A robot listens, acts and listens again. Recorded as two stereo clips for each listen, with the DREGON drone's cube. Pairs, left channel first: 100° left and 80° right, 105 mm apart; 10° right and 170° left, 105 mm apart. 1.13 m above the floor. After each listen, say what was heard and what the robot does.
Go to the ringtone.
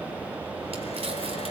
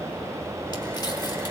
Keep listening.
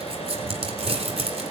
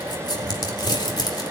Keep listening.
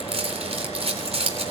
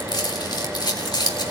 I can't make out a ringtone to turn to.